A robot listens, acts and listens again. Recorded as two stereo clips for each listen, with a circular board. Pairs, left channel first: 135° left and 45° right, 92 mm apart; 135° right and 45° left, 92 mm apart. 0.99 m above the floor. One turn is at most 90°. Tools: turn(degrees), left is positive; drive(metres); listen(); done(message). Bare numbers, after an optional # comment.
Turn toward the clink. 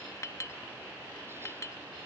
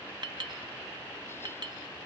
# The clink: 80° left.
turn(80)
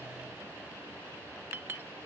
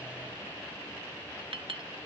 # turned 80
# The clink is now 20° left.
turn(20)
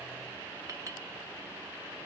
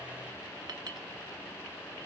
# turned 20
listen()
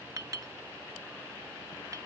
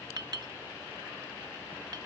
done("Facing the clink.")